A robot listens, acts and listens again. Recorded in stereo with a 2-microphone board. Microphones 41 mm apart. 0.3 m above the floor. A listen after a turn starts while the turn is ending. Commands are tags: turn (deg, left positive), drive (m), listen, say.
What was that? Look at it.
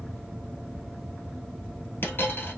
<turn deg="60"/>
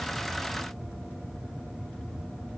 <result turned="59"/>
<listen/>
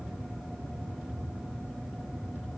<say>I heard a dropped coin, but can't make it out now. It was about straight ahead or 60° left.</say>